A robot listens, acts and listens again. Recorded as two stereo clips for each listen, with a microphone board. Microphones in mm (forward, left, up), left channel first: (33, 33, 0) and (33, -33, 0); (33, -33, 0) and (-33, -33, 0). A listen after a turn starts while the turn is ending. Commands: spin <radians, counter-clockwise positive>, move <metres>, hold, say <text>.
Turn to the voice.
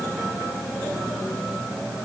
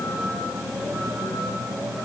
hold
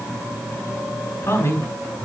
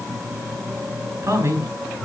spin 2.36
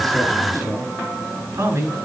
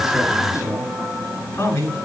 spin -0.79
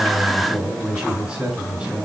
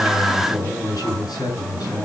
spin -0.26
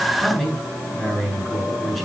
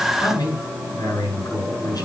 say Facing the man speaking, over 4 m away.